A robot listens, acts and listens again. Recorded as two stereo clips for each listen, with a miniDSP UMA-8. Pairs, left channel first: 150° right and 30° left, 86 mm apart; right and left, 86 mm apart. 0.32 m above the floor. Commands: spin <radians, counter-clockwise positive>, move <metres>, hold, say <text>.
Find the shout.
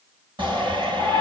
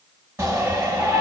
spin 0.52
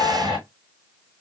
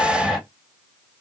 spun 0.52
say Facing the shout, 1 to 2 m away.